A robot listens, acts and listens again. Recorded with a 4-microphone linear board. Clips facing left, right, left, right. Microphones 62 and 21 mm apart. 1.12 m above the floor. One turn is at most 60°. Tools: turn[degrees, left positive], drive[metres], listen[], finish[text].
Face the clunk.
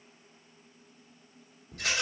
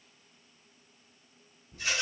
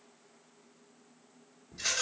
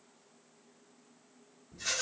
Action: listen[]
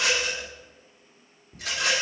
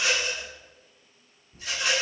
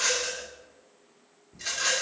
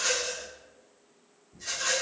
Action: listen[]
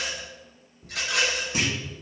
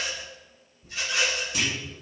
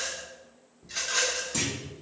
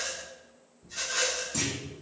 Thought: The clunk: about 25° left or 155° left.
Action: turn[25]
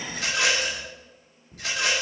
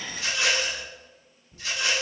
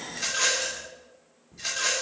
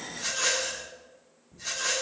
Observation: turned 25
Action: listen[]
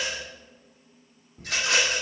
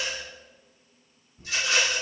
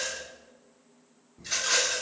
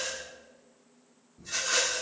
Action: finish[I heard a clunk, but can't make it out now. It was about straight ahead or 130° left.]